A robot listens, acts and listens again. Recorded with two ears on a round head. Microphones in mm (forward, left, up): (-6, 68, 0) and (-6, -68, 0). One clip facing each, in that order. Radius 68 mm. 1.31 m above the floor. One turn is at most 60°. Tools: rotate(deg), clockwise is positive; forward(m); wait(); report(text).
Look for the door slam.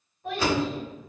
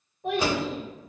rotate(15)
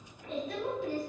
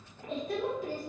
wait()
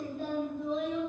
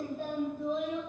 report("I heard a door slam, but can't make it out now. It was about straight ahead or 150° right.")